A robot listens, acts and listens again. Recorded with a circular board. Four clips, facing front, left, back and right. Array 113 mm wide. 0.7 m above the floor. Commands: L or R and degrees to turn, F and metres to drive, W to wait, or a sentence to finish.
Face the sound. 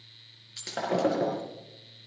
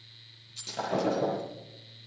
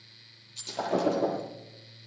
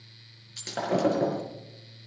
R40
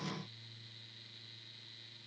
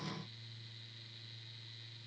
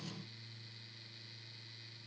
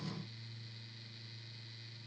Facing where the breaking glass came from. I can't hear it now.